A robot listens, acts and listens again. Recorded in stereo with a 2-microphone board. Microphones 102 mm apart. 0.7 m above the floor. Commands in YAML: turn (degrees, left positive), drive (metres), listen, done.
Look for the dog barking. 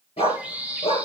turn: 90
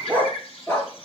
turn: 25
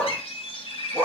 turn: 25
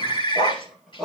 done: "Facing the dog barking."